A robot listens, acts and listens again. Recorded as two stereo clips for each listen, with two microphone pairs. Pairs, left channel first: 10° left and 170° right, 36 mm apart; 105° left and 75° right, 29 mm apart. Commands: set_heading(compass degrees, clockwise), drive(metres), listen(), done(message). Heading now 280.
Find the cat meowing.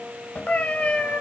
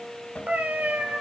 set_heading(325)
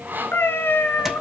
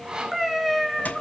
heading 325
done("Found it: a cat meowing, straight ahead, 2 to 4 m away.")